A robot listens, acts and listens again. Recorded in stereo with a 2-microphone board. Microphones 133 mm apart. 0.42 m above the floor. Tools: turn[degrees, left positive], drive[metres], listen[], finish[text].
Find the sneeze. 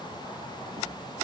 Action: listen[]
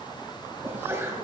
Thought: The sneeze: about 15° right or 165° right.
Action: turn[-15]
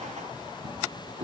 Action: listen[]
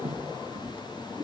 Action: finish[I heard a sneeze, but can't make it out now. It was about straight ahead or 150° right.]